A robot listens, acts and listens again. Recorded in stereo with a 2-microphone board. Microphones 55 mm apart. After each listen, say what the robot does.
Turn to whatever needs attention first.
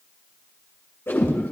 Keep listening.
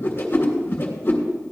Keep listening.
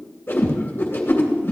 I can't make out anything urgent, only a whoosh.